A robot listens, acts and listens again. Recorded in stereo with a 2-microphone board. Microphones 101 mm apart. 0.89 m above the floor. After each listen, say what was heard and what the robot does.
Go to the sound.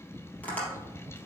Turn 30° left.
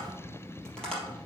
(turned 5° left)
Turn 30° left.
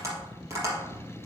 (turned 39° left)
So it is at 30° right. Turn 30° right.
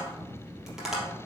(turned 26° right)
Drive 1.0 m forward.
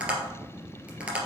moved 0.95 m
The tapping is now 10° right. Turn 10° right.
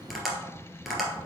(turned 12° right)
Drive 1.0 m forward.
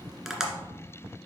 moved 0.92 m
Drive 1.0 m forward.
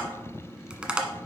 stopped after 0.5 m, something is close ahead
The tapping is now 10° right. Turn 10° right.
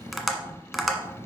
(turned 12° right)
Arrived at the tapping, straight ahead.